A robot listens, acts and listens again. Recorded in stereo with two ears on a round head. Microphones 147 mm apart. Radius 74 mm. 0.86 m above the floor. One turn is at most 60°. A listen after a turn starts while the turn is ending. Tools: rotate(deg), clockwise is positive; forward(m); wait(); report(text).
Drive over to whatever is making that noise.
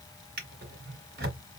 rotate(60)
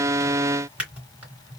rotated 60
rotate(10)
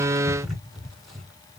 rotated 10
forward(1.0)
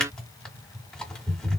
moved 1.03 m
forward(1.0)
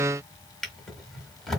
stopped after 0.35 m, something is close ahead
report("I am next to the drawer.")